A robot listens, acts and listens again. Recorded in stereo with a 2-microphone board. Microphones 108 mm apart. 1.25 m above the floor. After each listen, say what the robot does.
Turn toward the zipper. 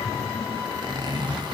Turn 40° right.
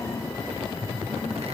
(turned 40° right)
Keep listening.
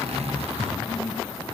Turn 95° right.
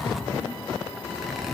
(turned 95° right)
Facing the zipper, under 1 m away.